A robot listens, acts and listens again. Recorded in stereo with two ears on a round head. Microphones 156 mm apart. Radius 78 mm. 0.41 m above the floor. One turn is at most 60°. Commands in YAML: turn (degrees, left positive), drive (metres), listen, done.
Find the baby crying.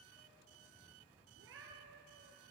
listen: true
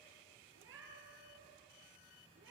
listen: true
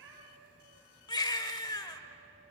turn: 25
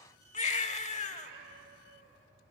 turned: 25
turn: 60
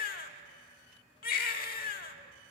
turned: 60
turn: 60
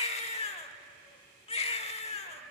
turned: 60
turn: 45
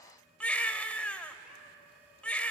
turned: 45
turn: 10
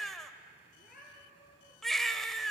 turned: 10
done: "Facing the baby crying."